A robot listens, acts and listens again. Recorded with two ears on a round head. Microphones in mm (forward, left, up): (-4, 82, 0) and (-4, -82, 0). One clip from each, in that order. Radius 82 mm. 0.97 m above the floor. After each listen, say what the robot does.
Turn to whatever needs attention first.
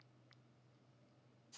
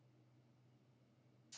Keep listening.
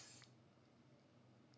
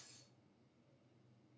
Keep listening.
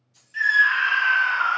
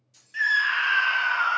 Turn 15° right.
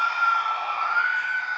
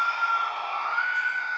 Facing the scream, 1 to 2 m away.